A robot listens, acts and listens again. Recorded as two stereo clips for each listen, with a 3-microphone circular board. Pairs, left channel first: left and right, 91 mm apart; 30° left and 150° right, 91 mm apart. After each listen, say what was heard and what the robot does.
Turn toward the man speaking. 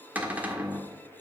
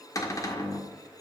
Keep listening.
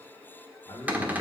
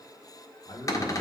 The man speaking: 45° left. Turn 45° left.
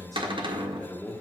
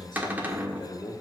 The man speaking is now 15° left. Turn 15° left.
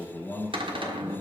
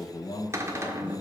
The man speaking is now 25° left. Turn 25° left.
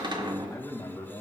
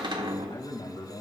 The man speaking is now 40° left. Turn 40° left.
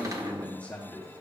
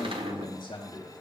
The man speaking is now 20° left. Turn 20° left.
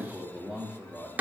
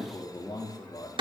Found it: a man speaking, straight ahead.